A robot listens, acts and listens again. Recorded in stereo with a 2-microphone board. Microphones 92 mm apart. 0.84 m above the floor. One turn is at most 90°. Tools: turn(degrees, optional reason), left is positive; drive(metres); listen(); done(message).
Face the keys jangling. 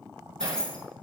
turn(degrees=30)
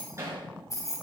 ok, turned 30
turn(degrees=90, reason="So it is at 140° left.")
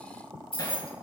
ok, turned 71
turn(degrees=70, reason="The keys jangling is now 70° left.")
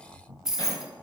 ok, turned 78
done("Facing the keys jangling.")